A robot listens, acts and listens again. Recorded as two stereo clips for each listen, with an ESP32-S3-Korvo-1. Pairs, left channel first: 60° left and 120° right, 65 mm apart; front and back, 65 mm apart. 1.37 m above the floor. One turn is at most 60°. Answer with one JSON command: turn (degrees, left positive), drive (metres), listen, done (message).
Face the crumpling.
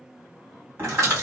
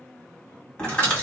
{"turn": -60}
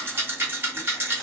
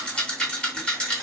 {"turn": -15}
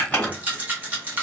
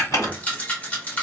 {"done": "Facing the crumpling."}